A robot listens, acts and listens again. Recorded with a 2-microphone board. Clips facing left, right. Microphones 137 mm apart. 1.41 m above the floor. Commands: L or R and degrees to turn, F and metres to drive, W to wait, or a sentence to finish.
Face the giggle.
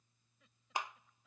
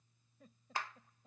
R45
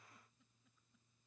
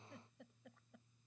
R90
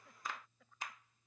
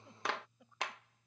R20
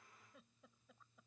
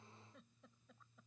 Found it: a giggle, straight ahead.